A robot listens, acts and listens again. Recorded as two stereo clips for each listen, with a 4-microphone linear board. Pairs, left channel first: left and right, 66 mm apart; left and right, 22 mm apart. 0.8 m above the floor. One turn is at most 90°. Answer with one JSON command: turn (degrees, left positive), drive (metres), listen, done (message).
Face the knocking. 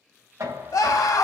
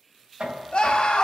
{"turn": -50}
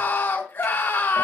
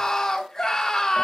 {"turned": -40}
{"listen": true}
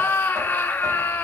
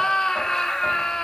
{"listen": true}
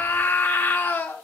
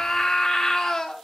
{"done": "I heard knocking, but can't make it out now. It was about 10° right or 90° right."}